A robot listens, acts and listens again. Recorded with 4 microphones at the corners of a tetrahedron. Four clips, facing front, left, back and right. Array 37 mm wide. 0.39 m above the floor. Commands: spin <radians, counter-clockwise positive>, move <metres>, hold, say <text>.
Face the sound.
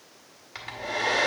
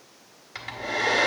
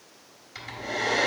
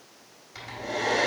spin 0.87
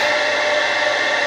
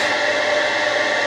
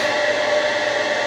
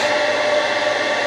spin -0.17
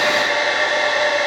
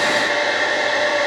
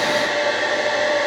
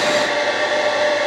say Found it: a hair dryer, straight ahead, 1 to 2 m away.